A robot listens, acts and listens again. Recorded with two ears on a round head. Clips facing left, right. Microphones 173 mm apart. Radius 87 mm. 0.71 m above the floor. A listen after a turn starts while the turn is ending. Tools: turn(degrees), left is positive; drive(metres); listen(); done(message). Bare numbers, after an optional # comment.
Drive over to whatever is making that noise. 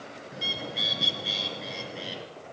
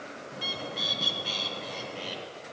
turn(30)
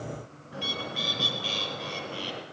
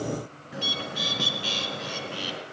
# So it is at 25° right.
turn(-25)
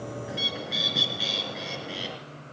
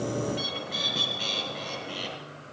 drive(1.0)
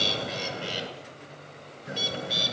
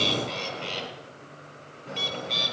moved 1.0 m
drive(1.0)
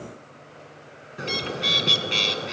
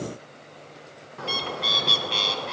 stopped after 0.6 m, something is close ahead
# The bird is now 20° left.
turn(20)
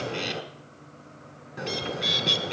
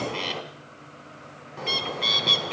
# The bird is now 10° left.
turn(10)
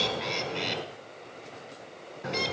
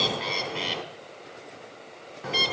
done("Arrived at the bird, straight ahead.")